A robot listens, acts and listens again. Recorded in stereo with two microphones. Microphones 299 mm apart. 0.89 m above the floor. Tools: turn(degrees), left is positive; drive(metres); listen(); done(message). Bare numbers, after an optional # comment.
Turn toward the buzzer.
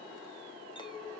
listen()
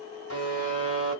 # The buzzer: about 60° left or 120° left.
turn(60)
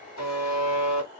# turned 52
# So it is at 65° left.
turn(65)
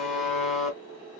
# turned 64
done("Found it: a buzzer, straight ahead.")